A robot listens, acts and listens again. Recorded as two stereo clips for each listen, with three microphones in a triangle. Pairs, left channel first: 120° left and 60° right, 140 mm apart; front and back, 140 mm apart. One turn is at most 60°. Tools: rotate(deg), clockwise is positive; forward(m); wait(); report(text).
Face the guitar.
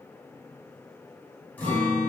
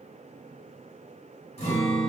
rotate(-40)
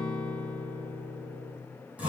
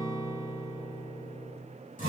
rotate(-20)
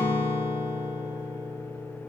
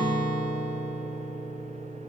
report("Found it: a guitar, straight ahead, 1 to 2 m away.")